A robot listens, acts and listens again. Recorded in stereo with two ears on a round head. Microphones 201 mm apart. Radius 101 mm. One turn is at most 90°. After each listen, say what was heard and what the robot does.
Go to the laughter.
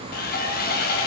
Keep listening.
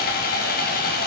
Keep listening.
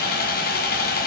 I can't make out laughter to turn to.